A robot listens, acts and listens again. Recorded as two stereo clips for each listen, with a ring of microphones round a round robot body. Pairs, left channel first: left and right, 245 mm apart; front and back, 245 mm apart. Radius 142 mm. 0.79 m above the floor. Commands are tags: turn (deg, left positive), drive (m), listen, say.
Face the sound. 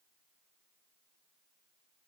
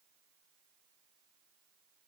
<listen/>
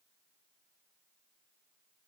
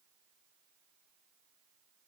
<listen/>
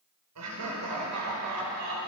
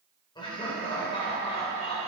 <turn deg="-70"/>
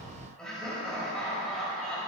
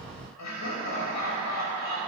<say>Facing the laughter.</say>